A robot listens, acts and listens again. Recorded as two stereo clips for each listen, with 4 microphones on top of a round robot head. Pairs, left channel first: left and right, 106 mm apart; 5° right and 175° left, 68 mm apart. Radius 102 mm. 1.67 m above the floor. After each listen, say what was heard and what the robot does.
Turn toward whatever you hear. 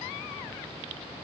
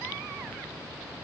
Keep listening.
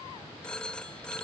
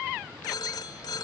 Found it: a phone ringing, straight ahead.